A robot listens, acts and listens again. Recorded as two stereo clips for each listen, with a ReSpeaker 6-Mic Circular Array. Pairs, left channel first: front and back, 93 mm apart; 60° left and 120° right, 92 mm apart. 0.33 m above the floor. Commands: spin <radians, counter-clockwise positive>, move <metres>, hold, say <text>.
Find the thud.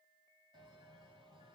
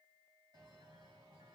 hold
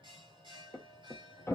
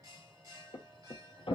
spin 1.05
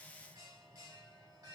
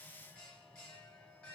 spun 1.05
say I heard a thud from this way, but can't make it out now.